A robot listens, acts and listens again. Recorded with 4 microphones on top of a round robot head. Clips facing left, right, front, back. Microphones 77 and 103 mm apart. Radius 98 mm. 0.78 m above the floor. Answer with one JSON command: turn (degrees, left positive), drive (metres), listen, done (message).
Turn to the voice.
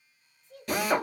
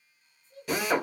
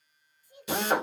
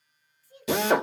{"turn": 75}
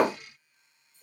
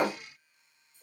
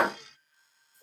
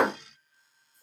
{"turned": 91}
{"turn": -15}
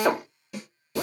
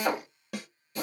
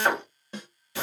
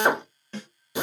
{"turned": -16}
{"listen": true}
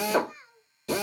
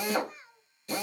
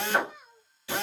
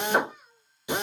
{"done": "Facing the child speaking."}